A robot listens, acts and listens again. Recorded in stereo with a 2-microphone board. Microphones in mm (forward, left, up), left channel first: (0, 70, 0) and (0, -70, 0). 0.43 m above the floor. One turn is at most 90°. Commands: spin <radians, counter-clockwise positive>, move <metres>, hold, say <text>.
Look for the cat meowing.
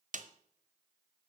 hold
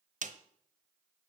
hold
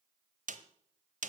say I can't make out a cat meowing to turn to.